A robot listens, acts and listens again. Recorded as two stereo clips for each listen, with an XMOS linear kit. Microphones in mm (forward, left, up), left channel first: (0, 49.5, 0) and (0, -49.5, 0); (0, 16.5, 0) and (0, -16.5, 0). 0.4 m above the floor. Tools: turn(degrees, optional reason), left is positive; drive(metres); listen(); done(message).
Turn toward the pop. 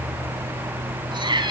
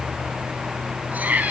listen()
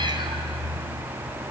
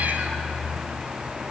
listen()
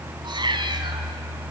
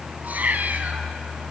done("I can't make out a pop to turn to.")